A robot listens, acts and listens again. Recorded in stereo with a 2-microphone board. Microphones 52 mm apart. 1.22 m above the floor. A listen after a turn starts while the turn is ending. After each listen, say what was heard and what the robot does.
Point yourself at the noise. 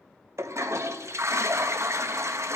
The toilet flushing: about 70° right or 110° right. Turn 70° right.
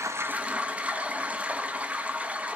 So it is at 25° right. Turn 25° right.
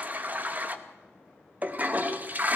The toilet flushing is now 35° right. Turn 35° right.
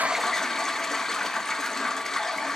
The toilet flushing is now 10° left. Turn 10° left.
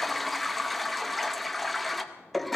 Facing the toilet flushing.